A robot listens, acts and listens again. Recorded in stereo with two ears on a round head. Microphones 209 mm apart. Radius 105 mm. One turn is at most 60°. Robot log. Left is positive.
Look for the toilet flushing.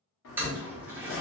cmd yaw -30
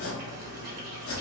cmd idle
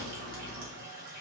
note: So it is at 140° right.
cmd yaw -60
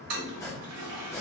note: The toilet flushing is now 75° right.
cmd yaw -60
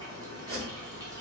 note: Nothing new. It was at 15° right.
cmd yaw -15
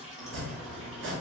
end: Facing the toilet flushing.